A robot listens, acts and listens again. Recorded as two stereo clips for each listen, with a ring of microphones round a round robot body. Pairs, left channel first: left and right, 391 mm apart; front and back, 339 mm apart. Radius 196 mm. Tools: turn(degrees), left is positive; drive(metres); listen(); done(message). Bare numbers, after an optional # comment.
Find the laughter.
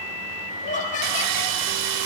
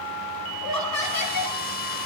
# The laughter: 20° left.
turn(20)
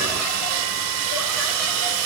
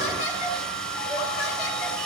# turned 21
listen()
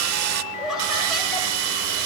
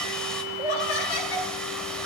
done("Found it: laughter, straight ahead, over 4 m away.")